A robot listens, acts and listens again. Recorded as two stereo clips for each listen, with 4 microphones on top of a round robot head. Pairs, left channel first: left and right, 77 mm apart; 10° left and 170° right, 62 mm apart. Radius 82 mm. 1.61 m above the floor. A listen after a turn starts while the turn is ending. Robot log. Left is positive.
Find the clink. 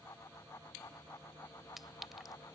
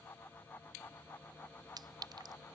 note: The clink: 175° right.
cmd yaw -175
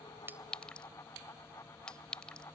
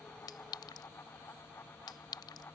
note: The clink is now 10° left.
cmd yaw +10
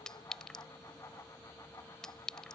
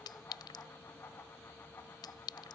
note: The clink is now 10° left.
cmd yaw +10
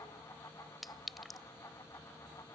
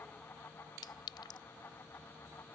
end: Found it: a clink, straight ahead.